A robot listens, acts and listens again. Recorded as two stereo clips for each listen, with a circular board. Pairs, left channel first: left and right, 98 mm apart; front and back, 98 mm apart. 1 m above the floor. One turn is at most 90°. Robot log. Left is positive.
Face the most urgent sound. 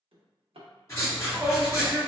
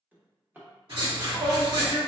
note: The shout: 155° right.
cmd yaw -90
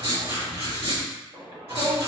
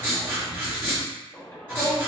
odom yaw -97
note: The shout is now 55° right.
cmd yaw -55
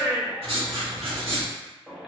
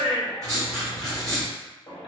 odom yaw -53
end: Facing the shout.